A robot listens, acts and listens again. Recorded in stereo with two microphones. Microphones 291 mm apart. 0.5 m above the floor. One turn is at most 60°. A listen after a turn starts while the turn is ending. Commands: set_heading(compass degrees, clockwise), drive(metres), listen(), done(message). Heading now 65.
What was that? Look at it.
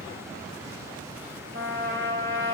set_heading(105)
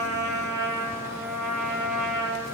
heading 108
set_heading(168)
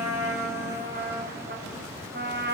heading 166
set_heading(201)
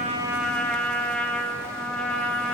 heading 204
done("Found it: a trumpet, straight ahead.")